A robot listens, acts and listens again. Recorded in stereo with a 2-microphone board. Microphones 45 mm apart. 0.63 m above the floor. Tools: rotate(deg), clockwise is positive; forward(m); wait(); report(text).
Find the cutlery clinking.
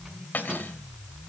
rotate(-45)
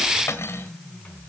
rotate(-90)
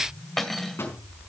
report("Found it: cutlery clinking, straight ahead, 1 to 2 m away.")